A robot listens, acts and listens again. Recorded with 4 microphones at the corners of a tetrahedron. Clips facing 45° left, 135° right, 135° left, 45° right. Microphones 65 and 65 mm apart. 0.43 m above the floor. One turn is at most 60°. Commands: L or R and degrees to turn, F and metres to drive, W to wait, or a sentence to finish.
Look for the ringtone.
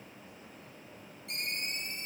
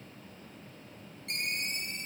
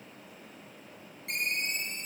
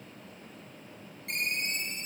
R60
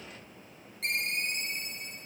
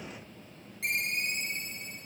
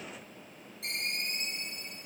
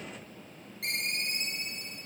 R50
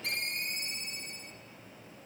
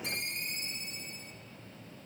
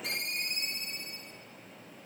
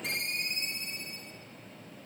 L15
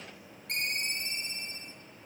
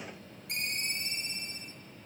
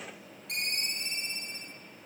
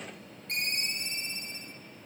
Found it: a ringtone, straight ahead.